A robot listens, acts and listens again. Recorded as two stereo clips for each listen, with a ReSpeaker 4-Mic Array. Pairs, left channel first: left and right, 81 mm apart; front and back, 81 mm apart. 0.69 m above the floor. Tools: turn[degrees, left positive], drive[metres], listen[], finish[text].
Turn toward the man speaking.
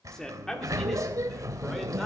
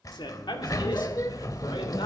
Action: finish[Found it: a man speaking, straight ahead.]